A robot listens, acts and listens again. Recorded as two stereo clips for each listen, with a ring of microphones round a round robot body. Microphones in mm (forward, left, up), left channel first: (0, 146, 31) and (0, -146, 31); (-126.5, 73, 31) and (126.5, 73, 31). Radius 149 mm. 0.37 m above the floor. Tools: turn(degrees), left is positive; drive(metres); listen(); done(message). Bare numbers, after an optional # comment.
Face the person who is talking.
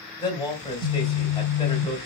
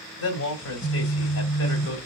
# The man speaking: 165° left.
turn(165)
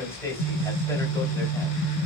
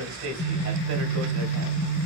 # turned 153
# The man speaking is now 10° left.
turn(10)
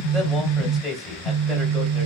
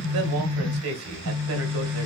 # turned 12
done("Found it: a man speaking, straight ahead.")